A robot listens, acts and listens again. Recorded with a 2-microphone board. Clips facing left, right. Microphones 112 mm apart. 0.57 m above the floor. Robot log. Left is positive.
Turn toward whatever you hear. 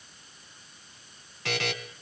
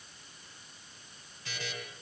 cmd yaw +90
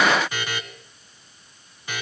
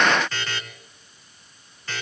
note: So it is at 15° left.
cmd yaw +15
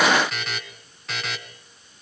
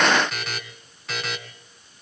end: Found it: a buzzer, straight ahead.